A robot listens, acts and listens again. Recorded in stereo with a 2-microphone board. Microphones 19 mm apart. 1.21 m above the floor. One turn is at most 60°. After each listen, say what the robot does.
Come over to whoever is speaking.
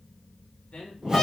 Turn 60° left.
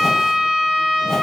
Keep listening.
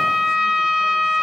Keep listening.
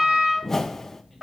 I heard a man speaking, but can't make it out now. It was about 10° left or 50° left. I did not reach it.